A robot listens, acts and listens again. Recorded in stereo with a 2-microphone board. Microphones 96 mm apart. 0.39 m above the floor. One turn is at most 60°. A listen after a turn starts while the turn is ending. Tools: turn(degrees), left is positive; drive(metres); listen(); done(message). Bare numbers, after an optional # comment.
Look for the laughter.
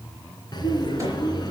# The laughter: about 45° left or 135° left.
turn(45)
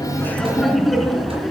done("Found it: laughter, straight ahead, over 4 m away.")